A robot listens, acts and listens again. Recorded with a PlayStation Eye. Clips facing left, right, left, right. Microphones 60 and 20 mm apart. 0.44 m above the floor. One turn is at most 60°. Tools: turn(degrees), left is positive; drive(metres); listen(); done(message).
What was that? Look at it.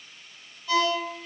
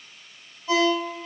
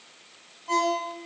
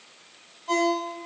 turn(degrees=-30)
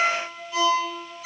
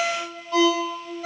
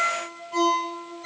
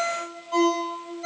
turn(degrees=-60)
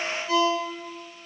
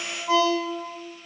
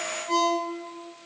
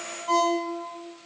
turn(degrees=-60)
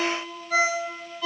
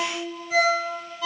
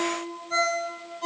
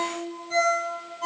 done("Found it: a ringtone, straight ahead.")